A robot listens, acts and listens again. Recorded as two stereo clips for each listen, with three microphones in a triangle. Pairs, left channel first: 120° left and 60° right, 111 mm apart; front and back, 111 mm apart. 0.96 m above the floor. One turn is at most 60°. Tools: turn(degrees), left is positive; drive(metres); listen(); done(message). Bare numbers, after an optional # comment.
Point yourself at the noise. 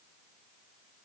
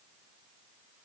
listen()
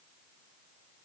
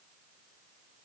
listen()
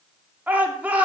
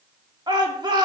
# The shout: 135° right.
turn(-60)
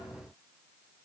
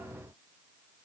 # Nothing new. It was at 75° right.
turn(-60)
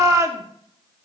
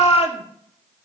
done("Facing the shout, 1 to 2 m away.")